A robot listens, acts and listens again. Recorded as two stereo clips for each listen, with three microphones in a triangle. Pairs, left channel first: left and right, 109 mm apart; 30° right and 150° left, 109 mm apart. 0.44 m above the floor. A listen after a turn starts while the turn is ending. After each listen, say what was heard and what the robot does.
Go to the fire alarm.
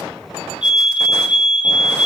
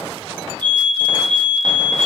The fire alarm: 170° right. Turn 170° right.
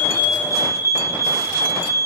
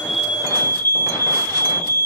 The fire alarm is now 35° left. Turn 35° left.
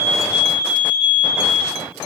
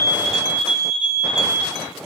The fire alarm is now 10° right. Turn 10° right.
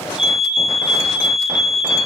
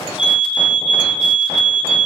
Drive 1.0 m forward.
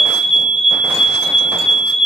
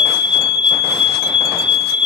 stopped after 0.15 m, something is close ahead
Something is in my way. I am facing the fire alarm but have not reached it.